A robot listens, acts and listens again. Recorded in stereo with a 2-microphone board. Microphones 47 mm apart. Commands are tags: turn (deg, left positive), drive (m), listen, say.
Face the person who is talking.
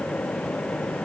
<listen/>
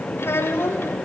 <turn deg="65"/>
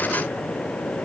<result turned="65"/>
<listen/>
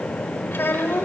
<turn deg="55"/>
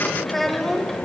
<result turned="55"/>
<say>Facing the child speaking.</say>